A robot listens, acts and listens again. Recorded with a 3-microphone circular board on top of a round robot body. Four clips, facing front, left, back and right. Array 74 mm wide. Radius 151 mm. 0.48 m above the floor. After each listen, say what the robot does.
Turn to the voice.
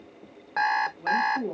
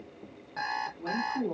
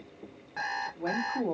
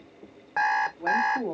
Turn 140° right.
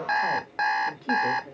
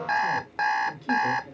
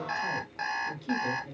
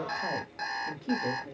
Turn 20° right.
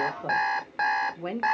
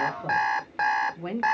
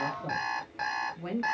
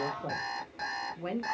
Turn 30° left.
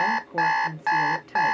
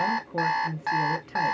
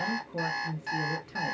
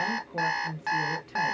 Turn 35° left.
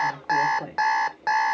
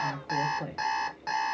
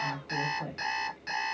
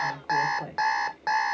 Found it: a woman speaking, straight ahead, 1 to 2 m away.